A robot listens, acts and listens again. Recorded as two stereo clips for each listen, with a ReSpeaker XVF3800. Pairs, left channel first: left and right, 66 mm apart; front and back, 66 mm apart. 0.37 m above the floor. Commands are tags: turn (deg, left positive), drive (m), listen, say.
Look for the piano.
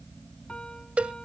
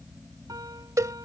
<turn deg="165"/>
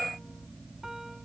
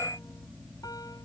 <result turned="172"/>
<say>Facing the piano.</say>